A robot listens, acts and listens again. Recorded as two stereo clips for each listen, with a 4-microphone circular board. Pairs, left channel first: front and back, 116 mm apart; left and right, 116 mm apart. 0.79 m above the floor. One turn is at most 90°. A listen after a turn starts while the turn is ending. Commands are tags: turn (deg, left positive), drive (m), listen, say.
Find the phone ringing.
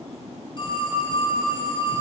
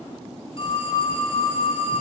<turn deg="50"/>
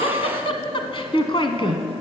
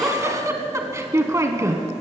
<listen/>
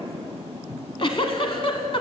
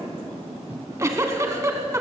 <listen/>
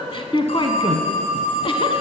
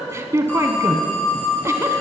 <turn deg="15"/>
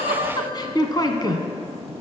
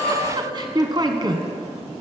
<listen/>
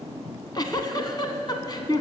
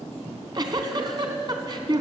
<listen/>
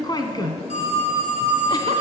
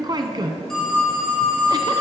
<say>Facing the phone ringing.</say>